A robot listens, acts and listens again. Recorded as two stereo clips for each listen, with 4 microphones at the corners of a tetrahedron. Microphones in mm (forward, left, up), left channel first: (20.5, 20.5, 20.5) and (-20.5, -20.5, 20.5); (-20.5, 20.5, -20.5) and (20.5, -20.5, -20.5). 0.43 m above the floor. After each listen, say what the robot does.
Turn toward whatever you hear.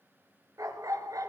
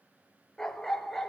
Turn 140° right.
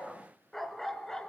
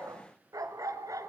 Turn 35° right.
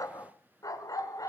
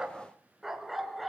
Turn 45° left.
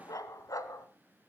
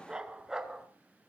Turn 35° left.
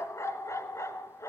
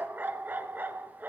Turn 10° left.
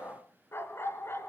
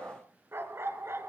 Facing the dog barking.